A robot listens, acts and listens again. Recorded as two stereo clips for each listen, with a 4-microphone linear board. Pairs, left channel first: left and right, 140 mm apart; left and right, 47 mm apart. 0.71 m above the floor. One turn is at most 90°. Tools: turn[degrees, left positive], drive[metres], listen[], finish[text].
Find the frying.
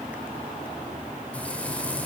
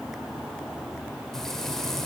Action: turn[30]
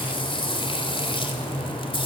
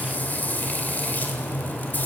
Thought: So it is at 140° left.
Action: turn[90]
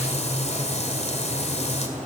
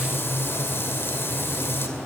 Thought: The frying is now 50° left.
Action: turn[50]
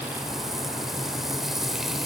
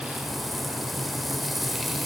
Action: finish[Found it: frying, straight ahead.]